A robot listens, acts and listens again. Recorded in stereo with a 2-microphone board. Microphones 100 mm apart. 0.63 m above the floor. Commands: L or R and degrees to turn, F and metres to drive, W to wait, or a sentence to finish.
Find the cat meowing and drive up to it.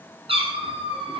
R65
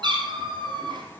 R50
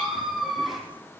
F1.0
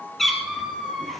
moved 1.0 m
F1.0
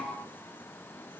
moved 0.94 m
W
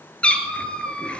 L10
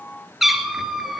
F1.0
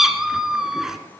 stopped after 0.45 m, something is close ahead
Arrived at the cat meowing, straight ahead.